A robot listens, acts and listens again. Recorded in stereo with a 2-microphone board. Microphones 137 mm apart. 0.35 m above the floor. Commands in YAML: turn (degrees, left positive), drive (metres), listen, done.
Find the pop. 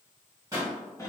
turn: -25
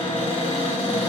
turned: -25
listen: true
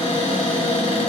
done: "I heard a pop, but can't make it out now. It was about straight ahead or 130° right."